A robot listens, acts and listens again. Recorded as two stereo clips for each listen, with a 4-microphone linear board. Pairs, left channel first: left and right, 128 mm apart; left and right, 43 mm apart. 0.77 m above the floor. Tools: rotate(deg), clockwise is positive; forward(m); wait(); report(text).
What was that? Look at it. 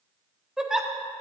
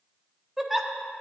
rotate(30)
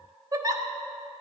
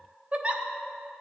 rotate(145)
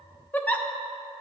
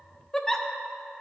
rotate(-15)
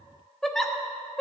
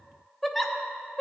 report("Found it: a giggle, straight ahead.")